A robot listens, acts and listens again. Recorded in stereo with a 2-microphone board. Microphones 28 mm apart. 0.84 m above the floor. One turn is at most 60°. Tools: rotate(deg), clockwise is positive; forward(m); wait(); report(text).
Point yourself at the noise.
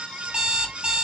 rotate(35)
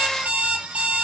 rotate(60)
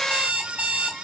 rotate(55)
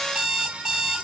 rotate(20)
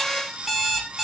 report("Facing the alarm clock.")